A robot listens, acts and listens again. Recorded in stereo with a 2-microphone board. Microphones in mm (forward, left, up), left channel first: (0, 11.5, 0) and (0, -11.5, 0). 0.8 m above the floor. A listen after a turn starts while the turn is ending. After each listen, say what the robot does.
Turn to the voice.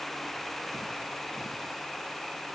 Keep listening.
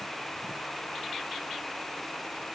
Keep listening.
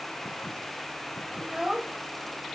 Turn 30° right.
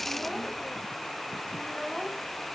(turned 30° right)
Keep listening.
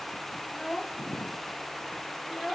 Found it: a child speaking, straight ahead.